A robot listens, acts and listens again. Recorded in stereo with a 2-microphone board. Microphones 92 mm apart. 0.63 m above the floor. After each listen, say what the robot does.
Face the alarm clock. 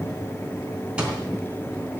Turn 30° right.
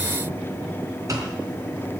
Turn 140° right.
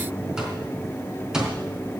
Turn 10° right.
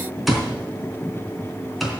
Found it: an alarm clock, straight ahead, 2 to 4 m away.